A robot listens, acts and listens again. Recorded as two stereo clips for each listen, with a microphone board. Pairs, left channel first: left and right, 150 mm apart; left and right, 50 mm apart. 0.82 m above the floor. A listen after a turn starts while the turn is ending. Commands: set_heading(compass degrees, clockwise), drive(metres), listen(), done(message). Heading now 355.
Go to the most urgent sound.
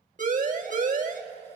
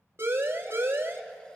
set_heading(55)
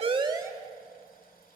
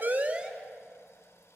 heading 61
listen()
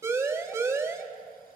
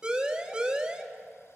set_heading(81)
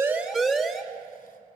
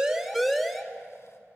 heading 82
drive(1.0)
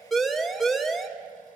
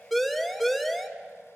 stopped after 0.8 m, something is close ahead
done("I am next to the siren.")